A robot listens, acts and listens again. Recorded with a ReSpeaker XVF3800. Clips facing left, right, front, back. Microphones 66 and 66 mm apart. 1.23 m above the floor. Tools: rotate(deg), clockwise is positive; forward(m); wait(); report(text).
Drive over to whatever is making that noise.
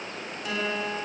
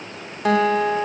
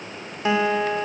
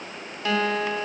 rotate(70)
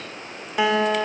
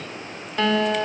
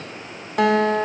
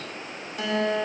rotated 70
rotate(-10)
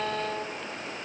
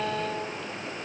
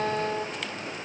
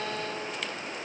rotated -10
forward(1.0)
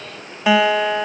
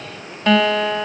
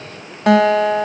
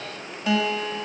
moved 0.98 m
rotate(-10)
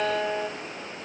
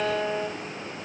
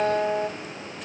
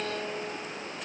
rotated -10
forward(1.0)
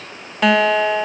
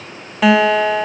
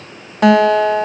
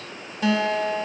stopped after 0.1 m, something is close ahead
report("I am next to the guitar.")